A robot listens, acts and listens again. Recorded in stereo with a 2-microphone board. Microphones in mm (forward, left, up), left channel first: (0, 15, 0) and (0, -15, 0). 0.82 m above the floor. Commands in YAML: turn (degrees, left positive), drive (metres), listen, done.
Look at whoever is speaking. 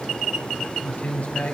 turn: 65
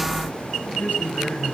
turn: 55
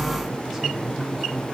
listen: true
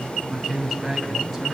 turn: -10
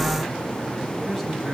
done: "Facing the man speaking, over 4 m away."